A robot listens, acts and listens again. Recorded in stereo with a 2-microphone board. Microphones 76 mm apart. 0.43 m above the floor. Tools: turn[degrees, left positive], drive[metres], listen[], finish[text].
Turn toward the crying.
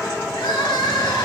Action: turn[90]
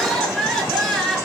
Action: finish[Facing the crying, over 4 m away.]